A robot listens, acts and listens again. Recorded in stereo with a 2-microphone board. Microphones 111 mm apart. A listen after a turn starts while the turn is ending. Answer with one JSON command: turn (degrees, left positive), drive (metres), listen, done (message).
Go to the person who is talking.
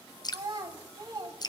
{"turn": -35}
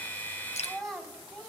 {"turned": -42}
{"drive": 1.0}
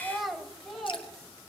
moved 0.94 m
{"drive": 1.0}
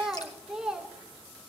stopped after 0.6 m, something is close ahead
{"done": "I am next to the child speaking."}